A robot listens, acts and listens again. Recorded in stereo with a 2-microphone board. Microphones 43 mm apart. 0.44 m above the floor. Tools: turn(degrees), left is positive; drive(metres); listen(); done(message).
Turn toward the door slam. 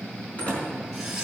turn(degrees=35)
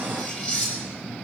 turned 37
listen()
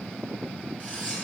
done("I heard a door slam, but can't make it out now. It was about straight ahead or 105° left.")